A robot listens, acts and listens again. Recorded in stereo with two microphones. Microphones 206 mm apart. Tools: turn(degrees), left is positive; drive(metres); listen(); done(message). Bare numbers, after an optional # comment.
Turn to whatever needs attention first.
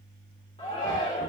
# The shout: about 25° left or 155° left.
turn(25)
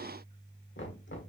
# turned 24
listen()
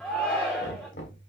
done("Facing the shout.")